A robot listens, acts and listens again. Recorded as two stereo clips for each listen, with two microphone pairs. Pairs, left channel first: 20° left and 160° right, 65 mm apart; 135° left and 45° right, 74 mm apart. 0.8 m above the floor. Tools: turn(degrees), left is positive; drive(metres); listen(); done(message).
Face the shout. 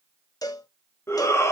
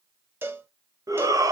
turn(degrees=-20)
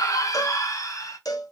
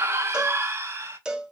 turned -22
done("Facing the shout.")